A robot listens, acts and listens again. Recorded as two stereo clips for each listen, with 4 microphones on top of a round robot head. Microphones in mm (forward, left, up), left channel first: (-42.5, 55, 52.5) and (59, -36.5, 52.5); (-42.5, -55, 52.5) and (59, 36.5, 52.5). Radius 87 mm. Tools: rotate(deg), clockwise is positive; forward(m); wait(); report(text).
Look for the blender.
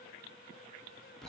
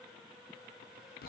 wait()
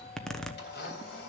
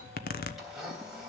rotate(-130)
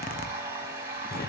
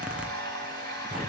rotate(-30)
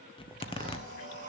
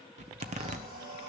wait()
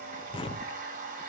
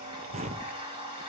rotate(10)
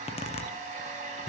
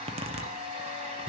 report("Facing the blender.")